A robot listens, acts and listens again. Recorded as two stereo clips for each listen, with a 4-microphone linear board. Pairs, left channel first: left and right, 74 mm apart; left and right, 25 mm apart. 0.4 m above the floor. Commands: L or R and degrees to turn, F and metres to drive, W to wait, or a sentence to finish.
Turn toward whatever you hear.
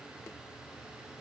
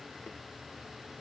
W
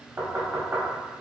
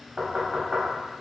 R50
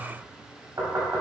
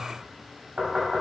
R75
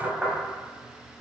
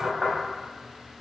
Facing the knocking.